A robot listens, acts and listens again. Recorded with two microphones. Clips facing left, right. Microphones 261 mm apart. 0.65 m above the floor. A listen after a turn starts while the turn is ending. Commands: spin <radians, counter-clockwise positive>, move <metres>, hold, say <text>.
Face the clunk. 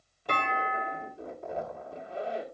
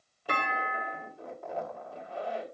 spin -0.52
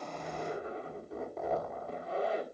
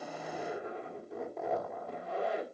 hold
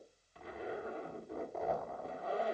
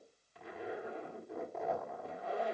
say I heard a clunk, but can't make it out now. It was about 25° left or 145° right.